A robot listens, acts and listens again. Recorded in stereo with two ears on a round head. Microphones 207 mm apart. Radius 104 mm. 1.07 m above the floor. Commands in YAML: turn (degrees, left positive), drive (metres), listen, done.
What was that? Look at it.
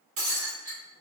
turn: -55
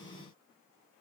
listen: true
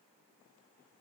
done: "I heard breaking glass, but can't make it out now. It was about straight ahead or 70° right."